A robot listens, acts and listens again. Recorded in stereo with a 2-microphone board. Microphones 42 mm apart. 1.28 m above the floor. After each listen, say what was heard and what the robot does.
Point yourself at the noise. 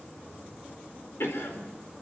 Turn 90° left.
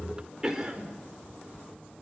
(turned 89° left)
So it is at 15° right. Turn 15° right.
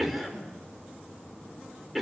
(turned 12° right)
Facing the cough, over 4 m away.